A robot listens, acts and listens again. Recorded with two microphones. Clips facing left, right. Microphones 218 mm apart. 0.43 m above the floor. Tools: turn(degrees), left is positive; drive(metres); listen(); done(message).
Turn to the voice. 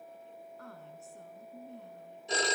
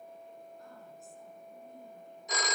turn(degrees=75)
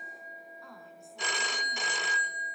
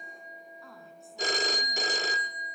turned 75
done("Found it: a woman speaking, straight ahead, over 4 m away.")